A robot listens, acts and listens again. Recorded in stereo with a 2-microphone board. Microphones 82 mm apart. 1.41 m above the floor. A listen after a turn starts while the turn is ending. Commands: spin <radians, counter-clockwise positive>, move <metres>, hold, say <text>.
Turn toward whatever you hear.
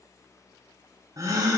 spin -0.70
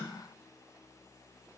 hold
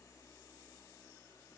say I heard a gasp, but can't make it out now. It was about straight ahead or 100° right.